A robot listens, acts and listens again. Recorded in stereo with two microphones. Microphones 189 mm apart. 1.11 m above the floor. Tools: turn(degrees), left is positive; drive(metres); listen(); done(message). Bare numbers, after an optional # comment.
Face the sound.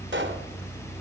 # The pop: about 70° right or 110° right.
turn(-70)
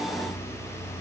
listen()
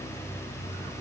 done("I heard a pop, but can't make it out now. It was about straight ahead or 40° right.")